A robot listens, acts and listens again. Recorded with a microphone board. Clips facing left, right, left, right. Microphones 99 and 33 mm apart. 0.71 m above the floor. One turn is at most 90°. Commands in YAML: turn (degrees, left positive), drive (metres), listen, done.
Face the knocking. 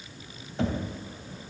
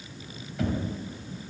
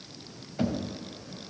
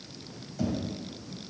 turn: 30
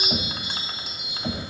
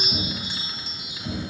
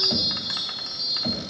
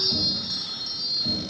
turn: 90
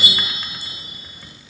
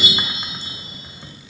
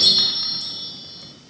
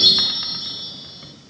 turn: 30
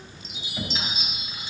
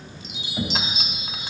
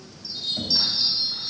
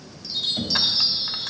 turn: -10
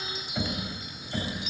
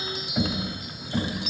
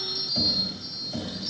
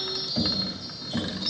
done: "Facing the knocking, 2 to 4 m away."